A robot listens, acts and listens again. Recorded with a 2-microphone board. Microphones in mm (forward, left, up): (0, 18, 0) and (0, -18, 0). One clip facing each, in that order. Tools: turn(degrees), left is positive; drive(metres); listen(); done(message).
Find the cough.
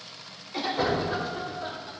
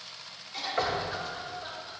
turn(degrees=30)
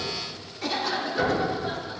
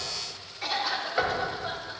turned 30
turn(degrees=-15)
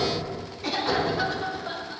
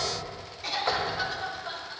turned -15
done("Found it: a cough, straight ahead.")